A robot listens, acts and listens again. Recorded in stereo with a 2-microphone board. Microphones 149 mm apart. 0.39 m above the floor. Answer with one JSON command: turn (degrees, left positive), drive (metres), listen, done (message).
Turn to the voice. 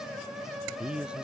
{"turn": -30}
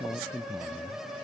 {"turn": 25}
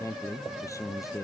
{"turn": 20}
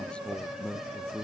{"turn": 10}
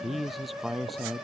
{"done": "Found it: a man speaking, straight ahead."}